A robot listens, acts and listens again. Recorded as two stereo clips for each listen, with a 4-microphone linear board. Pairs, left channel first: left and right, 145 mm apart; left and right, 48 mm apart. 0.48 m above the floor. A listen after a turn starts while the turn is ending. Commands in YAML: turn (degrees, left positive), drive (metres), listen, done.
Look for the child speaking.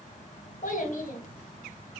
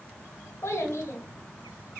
turn: 60
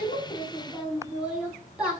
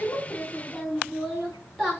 turn: -10
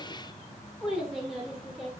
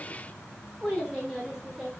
done: "Found it: a child speaking, straight ahead."